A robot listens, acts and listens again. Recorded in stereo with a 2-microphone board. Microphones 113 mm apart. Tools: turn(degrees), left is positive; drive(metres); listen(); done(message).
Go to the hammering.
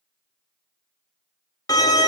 listen()
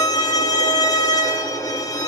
listen()
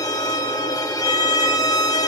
done("I can't make out hammering to turn to.")